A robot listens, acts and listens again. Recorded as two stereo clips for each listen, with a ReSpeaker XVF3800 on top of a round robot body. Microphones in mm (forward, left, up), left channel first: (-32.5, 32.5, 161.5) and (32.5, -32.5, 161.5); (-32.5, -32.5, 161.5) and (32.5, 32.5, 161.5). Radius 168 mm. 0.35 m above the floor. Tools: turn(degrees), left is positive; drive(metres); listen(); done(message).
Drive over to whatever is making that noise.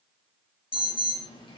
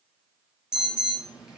turn(degrees=125)
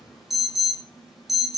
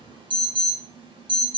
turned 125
turn(degrees=40)
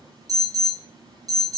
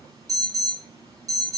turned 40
drive(metres=1.0)
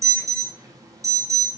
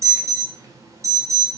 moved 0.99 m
drive(metres=1.0)
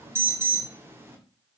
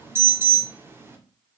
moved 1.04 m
drive(metres=1.0)
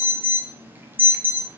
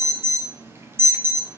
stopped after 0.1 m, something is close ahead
done("I am next to the alarm.")